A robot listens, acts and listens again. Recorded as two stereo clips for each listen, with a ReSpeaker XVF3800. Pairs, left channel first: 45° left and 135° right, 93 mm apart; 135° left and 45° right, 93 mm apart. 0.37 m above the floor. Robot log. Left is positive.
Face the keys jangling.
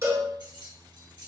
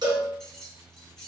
note: The keys jangling: 145° right.
cmd yaw -145
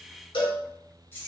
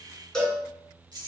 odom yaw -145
note: The keys jangling is now 15° right.
cmd yaw -15
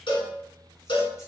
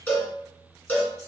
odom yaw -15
cmd idle
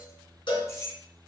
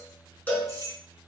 end: Found it: keys jangling, straight ahead, under 1 m away.